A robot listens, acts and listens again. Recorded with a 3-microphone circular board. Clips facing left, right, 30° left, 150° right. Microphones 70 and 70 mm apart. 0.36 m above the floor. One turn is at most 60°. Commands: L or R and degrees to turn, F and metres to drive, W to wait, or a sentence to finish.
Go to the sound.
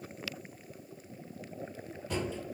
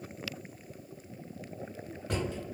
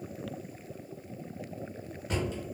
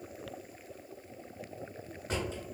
R60
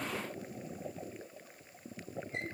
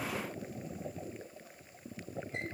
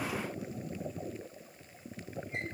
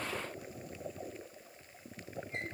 R35
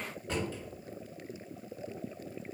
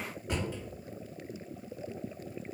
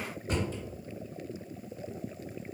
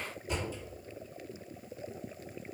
R15
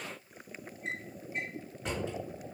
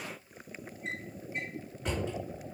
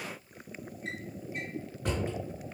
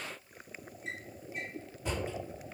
F1.0
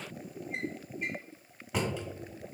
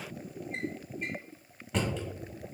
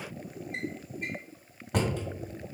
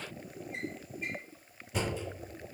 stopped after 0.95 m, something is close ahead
Arrived at the drawer, straight ahead.